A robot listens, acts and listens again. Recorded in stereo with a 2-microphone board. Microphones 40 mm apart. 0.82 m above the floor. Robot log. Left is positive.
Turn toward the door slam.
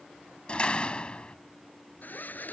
note: The door slam: about 25° left or 155° left.
cmd yaw +25
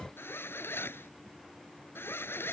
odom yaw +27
cmd idle
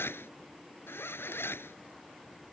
end: I heard a door slam, but can't make it out now. It was about straight ahead or 125° left.